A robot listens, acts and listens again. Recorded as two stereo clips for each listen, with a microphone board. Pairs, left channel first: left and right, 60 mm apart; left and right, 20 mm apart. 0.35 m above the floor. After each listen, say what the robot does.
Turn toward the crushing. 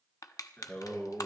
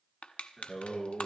Turn 90° left.
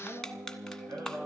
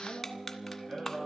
Turn 10° left.
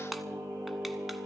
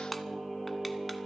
Keep listening.
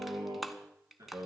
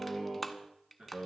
Found it: crushing, straight ahead, 1 to 2 m away.